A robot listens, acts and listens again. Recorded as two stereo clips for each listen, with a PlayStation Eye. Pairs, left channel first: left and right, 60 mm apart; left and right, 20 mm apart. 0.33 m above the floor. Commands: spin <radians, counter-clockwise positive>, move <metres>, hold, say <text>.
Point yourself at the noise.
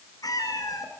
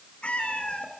spin 1.22
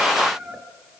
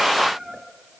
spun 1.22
spin -0.26
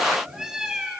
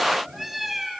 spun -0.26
spin -0.17
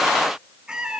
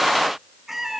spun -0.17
spin -0.26
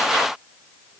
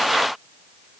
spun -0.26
hold
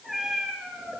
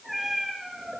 say Facing the cat meowing.